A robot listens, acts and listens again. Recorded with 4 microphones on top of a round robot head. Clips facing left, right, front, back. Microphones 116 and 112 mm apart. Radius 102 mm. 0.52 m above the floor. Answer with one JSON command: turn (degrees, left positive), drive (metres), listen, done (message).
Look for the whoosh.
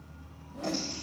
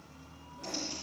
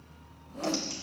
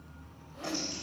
{"turn": 50}
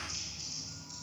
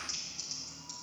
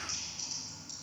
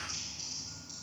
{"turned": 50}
{"listen": true}
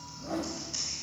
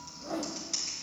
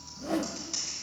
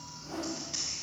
{"done": "Facing the whoosh."}